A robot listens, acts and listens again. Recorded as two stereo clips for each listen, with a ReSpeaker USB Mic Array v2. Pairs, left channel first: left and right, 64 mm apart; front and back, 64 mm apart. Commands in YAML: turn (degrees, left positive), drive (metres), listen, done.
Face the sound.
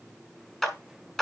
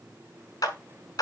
turn: 10
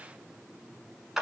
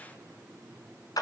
done: "Facing the clap."